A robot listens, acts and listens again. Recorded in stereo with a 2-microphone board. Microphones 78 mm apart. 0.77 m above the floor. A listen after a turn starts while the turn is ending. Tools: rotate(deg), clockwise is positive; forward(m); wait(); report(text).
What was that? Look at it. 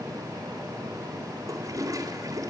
rotate(45)
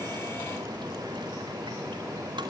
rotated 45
wait()
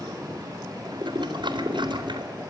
rotate(85)
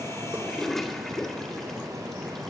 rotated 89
report("Found it: a toilet flushing, straight ahead, 2 to 4 m away.")